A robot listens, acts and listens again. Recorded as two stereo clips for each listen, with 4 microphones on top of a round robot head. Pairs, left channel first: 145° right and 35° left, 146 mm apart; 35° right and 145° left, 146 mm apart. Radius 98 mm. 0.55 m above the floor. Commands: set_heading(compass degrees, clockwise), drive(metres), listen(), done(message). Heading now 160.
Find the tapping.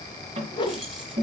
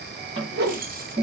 set_heading(70)
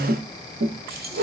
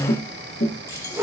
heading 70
done("Facing the tapping, 1 to 2 m away.")